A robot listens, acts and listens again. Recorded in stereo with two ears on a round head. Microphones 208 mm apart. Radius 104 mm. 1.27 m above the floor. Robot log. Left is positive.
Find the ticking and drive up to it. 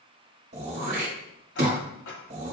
note: The ticking: about 50° left or 130° left.
cmd yaw +50
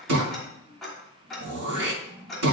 cmd fwd 1.0
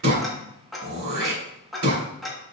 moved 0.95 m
cmd fwd 1.0
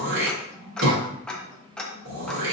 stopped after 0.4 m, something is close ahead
end: I am next to the ticking.